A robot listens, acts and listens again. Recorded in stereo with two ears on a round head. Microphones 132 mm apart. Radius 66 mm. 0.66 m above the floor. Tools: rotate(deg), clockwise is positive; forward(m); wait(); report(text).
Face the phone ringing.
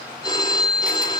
rotate(-25)
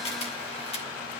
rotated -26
wait()
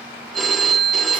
report("Found it: a phone ringing, straight ahead.")